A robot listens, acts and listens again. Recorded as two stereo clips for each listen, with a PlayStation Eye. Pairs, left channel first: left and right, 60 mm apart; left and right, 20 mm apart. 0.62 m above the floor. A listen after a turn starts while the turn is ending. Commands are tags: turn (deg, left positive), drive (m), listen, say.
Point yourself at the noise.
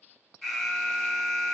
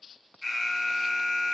<turn deg="30"/>
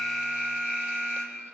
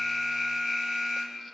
<turn deg="-30"/>
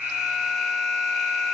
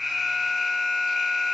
<say>Facing the alarm, 1 to 2 m away.</say>